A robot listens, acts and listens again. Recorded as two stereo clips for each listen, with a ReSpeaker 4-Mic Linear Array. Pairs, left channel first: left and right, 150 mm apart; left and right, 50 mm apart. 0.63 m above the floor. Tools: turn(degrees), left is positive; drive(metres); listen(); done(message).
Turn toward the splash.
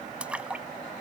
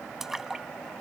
turn(degrees=-30)
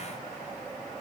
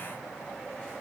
listen()
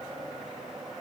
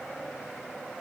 done("I heard a splash, but can't make it out now. It was about 25° left or 145° right.")